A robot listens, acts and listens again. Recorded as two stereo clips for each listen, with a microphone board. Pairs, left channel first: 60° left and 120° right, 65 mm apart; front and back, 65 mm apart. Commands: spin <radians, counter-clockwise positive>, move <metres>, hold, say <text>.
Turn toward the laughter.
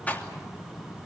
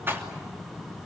hold
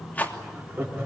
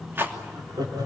spin -3.05
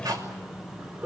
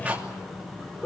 spin -1.13
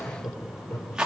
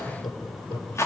say Facing the laughter, over 4 m away.